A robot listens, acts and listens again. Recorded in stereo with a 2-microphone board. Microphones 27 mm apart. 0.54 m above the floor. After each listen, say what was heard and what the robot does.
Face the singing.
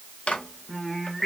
Turn 30° right.
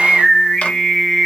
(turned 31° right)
So it is at 25° left. Turn 25° left.
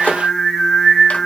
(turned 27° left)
Found it: singing, straight ahead.